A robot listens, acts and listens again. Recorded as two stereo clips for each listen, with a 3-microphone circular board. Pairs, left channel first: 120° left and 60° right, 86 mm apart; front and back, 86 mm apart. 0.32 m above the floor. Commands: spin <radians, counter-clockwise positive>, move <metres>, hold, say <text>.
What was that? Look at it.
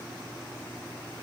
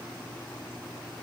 hold
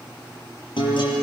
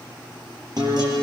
spin 2.44
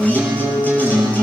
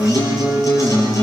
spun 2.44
spin 0.87
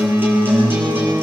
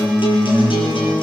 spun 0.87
say Facing the guitar.